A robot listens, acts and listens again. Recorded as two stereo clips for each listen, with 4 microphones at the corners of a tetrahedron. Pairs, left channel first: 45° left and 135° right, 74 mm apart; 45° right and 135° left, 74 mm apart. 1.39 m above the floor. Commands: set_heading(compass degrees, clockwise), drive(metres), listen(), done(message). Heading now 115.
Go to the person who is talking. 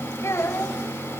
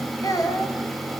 drive(1.0)
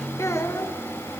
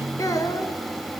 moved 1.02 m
drive(1.0)
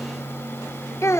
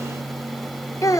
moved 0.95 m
drive(1.0)
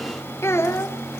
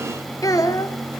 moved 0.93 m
drive(1.0)
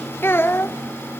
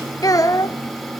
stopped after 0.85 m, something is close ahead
set_heading(125)
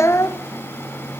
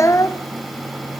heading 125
done("Arrived at the child speaking, straight ahead.")